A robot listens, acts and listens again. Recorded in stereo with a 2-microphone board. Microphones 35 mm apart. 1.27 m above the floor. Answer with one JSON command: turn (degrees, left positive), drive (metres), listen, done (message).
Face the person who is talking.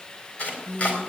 {"turn": 30}
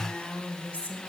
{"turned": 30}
{"turn": 135}
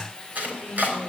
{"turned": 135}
{"turn": -25}
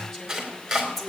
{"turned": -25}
{"done": "Found it: a woman speaking, straight ahead."}